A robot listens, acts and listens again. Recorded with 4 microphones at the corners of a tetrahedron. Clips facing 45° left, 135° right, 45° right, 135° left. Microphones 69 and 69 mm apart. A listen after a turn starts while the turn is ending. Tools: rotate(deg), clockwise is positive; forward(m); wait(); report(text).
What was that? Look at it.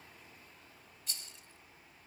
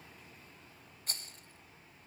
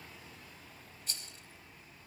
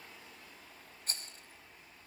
rotate(175)
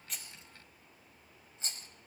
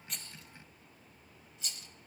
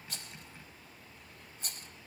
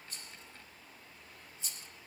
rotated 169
rotate(10)
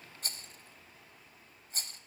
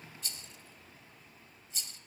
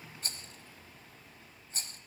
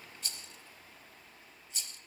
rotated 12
report("Found it: a rattle, straight ahead, under 1 m away.")